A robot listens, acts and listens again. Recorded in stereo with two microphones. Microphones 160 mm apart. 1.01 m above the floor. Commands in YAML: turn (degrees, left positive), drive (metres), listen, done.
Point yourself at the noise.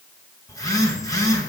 turn: 20
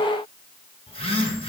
turn: 140
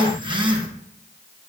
turn: -35
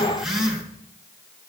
done: "Facing the phone buzzing."